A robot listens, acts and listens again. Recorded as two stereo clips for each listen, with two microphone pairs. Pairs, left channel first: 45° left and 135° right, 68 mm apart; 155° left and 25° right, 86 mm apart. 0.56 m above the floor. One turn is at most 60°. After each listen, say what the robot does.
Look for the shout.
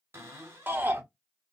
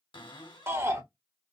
Turn 60° right.
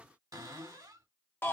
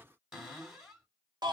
Found it: a shout, straight ahead, 1 to 2 m away.